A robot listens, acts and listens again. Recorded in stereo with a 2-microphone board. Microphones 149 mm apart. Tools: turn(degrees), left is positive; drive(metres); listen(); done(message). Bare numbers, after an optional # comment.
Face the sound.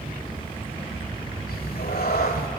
turn(90)
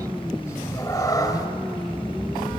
# So it is at 25° left.
turn(25)
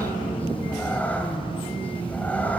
# The cat meowing is now 10° left.
turn(10)
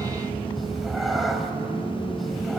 done("Found it: a cat meowing, straight ahead.")